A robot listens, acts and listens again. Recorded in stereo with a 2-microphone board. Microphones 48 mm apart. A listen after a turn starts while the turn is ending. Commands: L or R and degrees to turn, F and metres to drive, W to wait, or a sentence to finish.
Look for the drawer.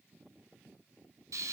W
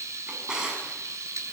R30
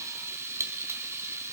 W
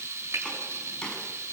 L20
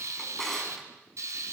Facing the drawer, over 4 m away.